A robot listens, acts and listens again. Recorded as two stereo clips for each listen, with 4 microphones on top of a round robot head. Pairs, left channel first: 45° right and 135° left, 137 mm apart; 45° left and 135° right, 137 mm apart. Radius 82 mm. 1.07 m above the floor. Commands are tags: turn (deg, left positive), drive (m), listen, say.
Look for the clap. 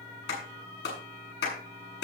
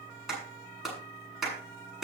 <turn deg="-45"/>
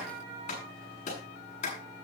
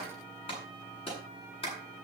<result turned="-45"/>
<say>Found it: a clap, straight ahead, over 4 m away.</say>